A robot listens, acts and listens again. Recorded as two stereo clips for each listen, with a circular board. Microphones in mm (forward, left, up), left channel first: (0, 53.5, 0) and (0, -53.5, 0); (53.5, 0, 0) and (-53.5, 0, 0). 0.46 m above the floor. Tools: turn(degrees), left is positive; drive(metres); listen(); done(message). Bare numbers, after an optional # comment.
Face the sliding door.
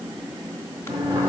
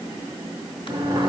# The sliding door: 130° right.
turn(-130)
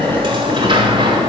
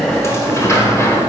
# The sliding door is now 60° right.
turn(-60)
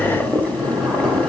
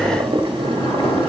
listen()
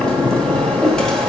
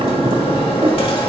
# The sliding door is now 10° left.
turn(10)
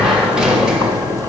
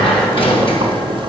done("Facing the sliding door.")